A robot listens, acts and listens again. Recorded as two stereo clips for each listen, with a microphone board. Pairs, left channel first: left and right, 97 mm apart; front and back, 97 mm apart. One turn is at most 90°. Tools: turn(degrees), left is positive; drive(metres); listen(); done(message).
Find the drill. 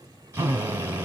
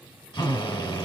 turn(degrees=-30)
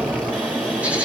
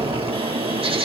listen()
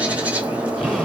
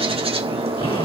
listen()
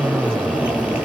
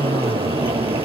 done("Found it: a drill, straight ahead.")